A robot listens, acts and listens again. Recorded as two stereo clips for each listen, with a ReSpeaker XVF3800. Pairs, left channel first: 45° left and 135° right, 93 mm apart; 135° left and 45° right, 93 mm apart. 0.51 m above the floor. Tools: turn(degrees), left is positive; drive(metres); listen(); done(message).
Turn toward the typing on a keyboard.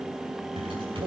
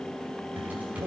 turn(degrees=-120)
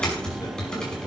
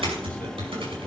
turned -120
turn(degrees=-35)
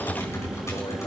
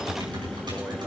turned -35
turn(degrees=-10)
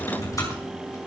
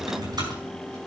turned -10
done("Found it: typing on a keyboard, straight ahead, over 4 m away.")